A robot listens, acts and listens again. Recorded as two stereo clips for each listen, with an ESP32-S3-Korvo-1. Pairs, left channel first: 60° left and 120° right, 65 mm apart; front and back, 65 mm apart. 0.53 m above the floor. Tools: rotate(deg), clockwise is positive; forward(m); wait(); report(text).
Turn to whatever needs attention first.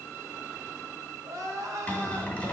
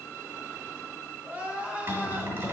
rotate(120)
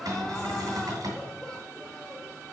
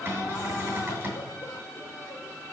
wait()
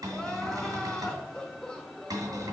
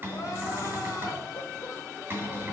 rotate(15)
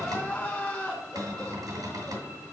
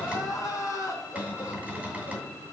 report("Found it: crying, straight ahead.")